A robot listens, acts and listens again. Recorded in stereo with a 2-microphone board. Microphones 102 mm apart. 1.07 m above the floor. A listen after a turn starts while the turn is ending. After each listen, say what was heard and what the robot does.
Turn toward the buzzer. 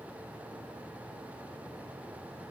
Keep listening.
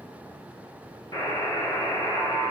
The buzzer: about 35° left or 145° left. Turn 35° left.
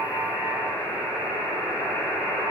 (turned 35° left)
Facing the buzzer.